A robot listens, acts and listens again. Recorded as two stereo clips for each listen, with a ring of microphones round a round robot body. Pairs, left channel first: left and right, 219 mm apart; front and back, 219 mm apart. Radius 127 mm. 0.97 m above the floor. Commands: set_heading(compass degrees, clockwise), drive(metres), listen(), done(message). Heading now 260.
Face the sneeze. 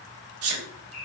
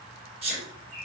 set_heading(15)
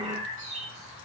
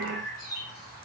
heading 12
done("Facing where the sneeze came from. I can't hear it now.")